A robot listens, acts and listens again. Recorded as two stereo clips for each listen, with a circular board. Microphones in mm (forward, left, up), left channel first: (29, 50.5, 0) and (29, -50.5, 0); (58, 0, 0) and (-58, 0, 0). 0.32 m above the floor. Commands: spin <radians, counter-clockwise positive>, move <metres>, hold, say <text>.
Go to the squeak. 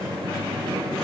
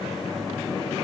hold
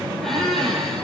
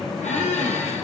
move 1.0
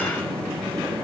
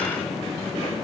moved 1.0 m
hold
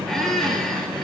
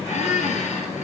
move 1.0
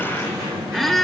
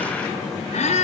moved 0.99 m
move 1.0
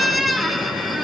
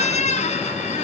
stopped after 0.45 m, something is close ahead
say Arrived at the squeak, straight ahead.